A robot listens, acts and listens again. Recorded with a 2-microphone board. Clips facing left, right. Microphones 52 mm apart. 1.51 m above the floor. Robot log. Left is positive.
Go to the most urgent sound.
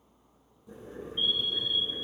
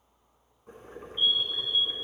note: The fire alarm: about 35° left or 145° left.
cmd yaw +35
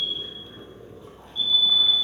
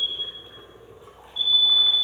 note: So it is at 105° left.
cmd yaw +105
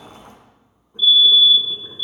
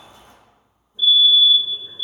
note: The fire alarm is now 20° right.
cmd yaw -20
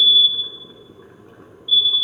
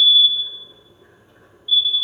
cmd fwd 1.0
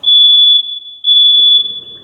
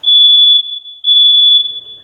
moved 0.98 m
cmd fwd 1.0
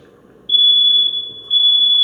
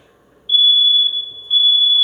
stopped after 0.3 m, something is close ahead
end: I am next to the fire alarm.